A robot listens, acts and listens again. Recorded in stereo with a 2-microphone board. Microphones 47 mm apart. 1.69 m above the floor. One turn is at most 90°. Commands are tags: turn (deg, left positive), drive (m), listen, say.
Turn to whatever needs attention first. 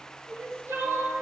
<turn deg="-60"/>
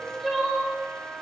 <say>Found it: crying, straight ahead.</say>